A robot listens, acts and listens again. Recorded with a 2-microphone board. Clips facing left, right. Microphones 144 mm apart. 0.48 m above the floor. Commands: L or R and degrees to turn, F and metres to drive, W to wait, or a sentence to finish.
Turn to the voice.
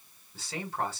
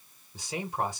R15
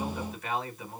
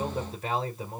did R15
R150
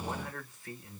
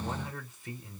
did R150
R20
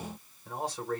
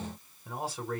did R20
Found it: a man speaking, straight ahead, 1 to 2 m away.